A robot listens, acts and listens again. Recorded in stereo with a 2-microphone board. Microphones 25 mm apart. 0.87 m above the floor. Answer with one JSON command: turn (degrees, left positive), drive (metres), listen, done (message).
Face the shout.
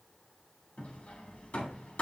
{"listen": true}
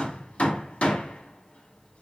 {"listen": true}
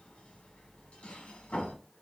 {"done": "I can't make out a shout, only hammering."}